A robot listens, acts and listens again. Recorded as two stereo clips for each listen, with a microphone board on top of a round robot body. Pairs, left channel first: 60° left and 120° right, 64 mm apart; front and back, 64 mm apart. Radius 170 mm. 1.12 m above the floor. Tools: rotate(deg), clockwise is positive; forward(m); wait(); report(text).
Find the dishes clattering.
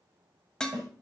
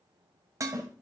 rotate(-140)
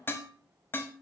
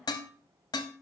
report("Facing the dishes clattering.")